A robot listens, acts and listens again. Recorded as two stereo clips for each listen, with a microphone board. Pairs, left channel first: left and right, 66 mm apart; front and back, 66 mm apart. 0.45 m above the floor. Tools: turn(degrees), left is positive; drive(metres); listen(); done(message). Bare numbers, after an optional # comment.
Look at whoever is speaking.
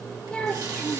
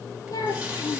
# The child speaking: 10° left.
turn(10)
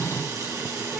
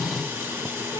listen()
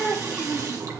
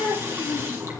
done("Found it: a child speaking, straight ahead, over 4 m away.")